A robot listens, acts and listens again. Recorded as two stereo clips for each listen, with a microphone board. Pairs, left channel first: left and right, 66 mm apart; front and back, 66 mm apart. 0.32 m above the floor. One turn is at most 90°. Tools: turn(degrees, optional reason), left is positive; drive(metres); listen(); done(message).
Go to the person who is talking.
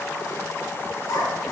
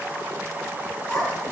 turn(degrees=70, reason="The child speaking: 70° left.")
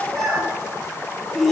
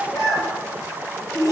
drive(metres=1.0)
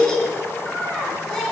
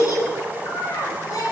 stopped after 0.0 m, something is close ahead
turn(degrees=10, reason="The child speaking is now 10° left.")
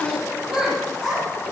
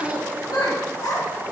done("Something is in my way. I am facing the child speaking but have not reached it.")